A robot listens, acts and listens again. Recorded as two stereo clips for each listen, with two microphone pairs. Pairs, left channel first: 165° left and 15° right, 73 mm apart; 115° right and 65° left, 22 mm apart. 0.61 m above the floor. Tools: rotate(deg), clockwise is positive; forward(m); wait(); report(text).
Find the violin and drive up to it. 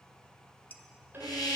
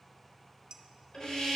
rotate(70)
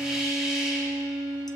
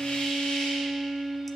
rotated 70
forward(1.0)
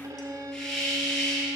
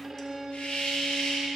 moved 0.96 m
forward(1.0)
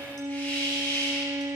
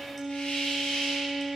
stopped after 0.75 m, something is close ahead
rotate(15)
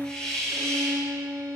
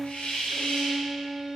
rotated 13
report("Arrived at the violin, straight ahead.")